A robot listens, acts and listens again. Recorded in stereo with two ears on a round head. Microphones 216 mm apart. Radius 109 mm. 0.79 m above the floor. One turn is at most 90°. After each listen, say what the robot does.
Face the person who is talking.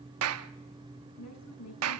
Turn 90° left.
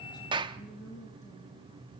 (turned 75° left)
Turn 20° left.
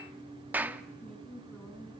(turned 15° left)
Facing the woman speaking.